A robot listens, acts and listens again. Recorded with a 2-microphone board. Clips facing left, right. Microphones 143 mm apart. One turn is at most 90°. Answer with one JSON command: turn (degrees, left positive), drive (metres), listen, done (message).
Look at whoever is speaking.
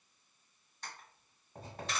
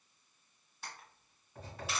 {"listen": true}
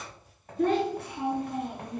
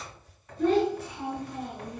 {"turn": 60}
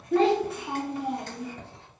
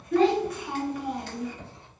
{"turn": 35}
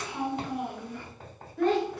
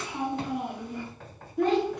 {"turn": -20}
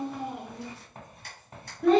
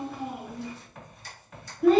{"done": "Found it: a child speaking, straight ahead, under 1 m away."}